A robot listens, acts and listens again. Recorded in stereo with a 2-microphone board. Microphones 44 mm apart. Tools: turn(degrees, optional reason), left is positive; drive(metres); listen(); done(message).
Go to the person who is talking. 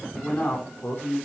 turn(degrees=50, reason="The man speaking: about 50° left or 130° left.")
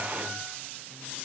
listen()
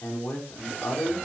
turn(degrees=80, reason="So it is at 80° left.")
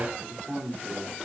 turn(degrees=-20, reason="The man speaking is now 20° right.")
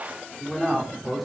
drive(metres=1.0)
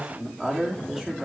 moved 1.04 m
turn(degrees=-10, reason="The man speaking is now 10° right.")
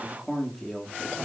drive(metres=1.0)
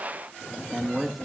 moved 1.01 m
drive(metres=1.0)
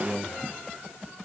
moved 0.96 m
drive(metres=1.0)
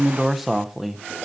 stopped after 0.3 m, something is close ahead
done("Arrived at the man speaking, straight ahead.")